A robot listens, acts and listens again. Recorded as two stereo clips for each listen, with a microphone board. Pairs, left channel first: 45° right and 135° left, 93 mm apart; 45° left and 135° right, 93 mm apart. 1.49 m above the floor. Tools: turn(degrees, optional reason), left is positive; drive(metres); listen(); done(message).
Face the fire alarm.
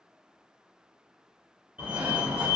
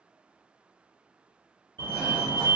turn(degrees=-155, reason="The fire alarm: 155° right.")
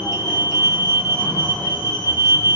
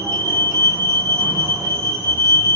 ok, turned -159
done("Found it: a fire alarm, straight ahead.")